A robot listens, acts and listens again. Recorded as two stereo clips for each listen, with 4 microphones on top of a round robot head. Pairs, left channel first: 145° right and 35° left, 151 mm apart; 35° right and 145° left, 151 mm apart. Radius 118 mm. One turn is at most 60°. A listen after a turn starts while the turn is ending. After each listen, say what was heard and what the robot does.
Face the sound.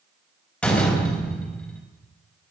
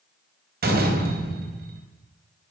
The door slam: 130° left. Turn 60° left.
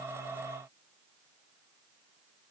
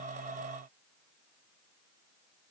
Nothing new. It was at 70° left. Turn 60° left.
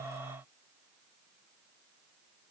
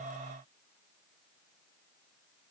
Nothing new. It was at 10° left. Turn 10° left.
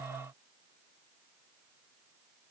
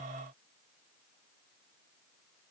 Facing where the door slam came from. I can't hear it now.